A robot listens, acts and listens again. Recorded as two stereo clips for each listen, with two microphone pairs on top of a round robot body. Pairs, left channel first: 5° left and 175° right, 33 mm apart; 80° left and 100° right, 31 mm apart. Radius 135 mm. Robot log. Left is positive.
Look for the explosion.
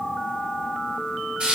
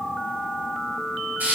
cmd idle
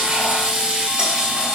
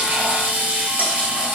cmd idle
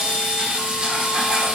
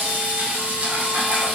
end: I can't make out an explosion to turn to.